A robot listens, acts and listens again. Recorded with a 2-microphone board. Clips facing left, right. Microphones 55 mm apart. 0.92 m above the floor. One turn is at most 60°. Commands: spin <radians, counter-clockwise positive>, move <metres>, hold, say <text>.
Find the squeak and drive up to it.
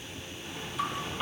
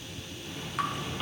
spin 0.52
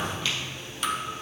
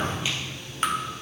spin -0.35
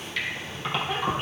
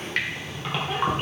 move 1.0
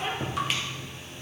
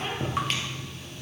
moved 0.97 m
spin 0.17
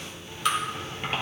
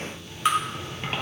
move 1.0
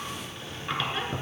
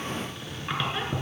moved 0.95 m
move 1.0
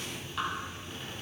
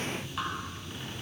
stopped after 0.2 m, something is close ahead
hold
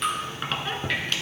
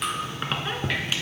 spin -0.17
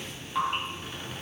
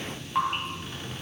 hold
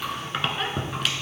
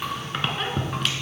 say Arrived at the squeak, straight ahead.